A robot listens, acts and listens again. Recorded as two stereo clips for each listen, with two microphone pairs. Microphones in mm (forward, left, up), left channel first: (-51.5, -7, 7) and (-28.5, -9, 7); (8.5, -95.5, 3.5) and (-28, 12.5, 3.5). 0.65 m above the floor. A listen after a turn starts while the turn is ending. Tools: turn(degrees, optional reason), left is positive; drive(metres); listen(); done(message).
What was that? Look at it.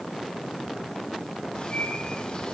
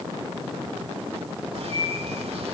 turn(degrees=125, reason="The bird: 125° left.")
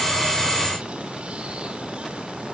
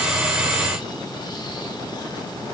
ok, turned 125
listen()
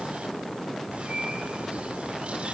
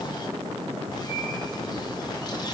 turn(degrees=-25, reason="The bird is now 25° right.")
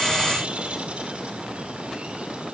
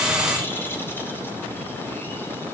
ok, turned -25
done("Found it: a bird, straight ahead, 2 to 4 m away.")